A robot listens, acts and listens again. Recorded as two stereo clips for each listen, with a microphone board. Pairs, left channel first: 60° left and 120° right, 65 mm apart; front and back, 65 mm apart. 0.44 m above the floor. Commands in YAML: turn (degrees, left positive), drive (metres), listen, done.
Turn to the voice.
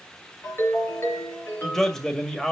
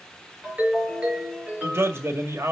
turn: 140
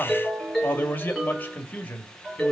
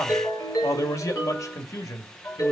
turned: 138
done: "Found it: a man speaking, straight ahead."